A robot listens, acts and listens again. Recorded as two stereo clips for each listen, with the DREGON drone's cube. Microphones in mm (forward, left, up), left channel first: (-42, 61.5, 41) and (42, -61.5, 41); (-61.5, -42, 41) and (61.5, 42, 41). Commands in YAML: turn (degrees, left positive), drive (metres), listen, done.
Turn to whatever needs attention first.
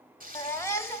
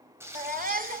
turn: 55
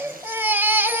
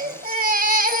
turn: 20
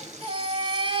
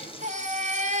done: "Facing the baby crying, 1 to 2 m away."